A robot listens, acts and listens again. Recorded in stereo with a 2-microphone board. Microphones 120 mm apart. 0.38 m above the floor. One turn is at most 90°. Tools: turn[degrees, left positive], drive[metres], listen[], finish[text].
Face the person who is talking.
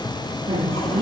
Thought: The woman speaking: about 45° right or 135° right.
Action: turn[-45]
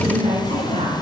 Thought: So it is at 90° right.
Action: turn[-90]
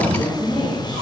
Thought: The woman speaking is now 35° left.
Action: turn[35]
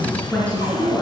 Thought: The woman speaking is now 10° left.
Action: turn[10]
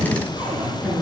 Action: finish[Facing the woman speaking.]